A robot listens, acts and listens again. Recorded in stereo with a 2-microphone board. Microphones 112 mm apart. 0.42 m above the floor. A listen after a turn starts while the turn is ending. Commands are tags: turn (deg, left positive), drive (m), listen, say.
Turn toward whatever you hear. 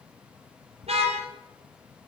<turn deg="-70"/>
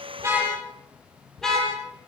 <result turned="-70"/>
<say>Facing the car horn, over 4 m away.</say>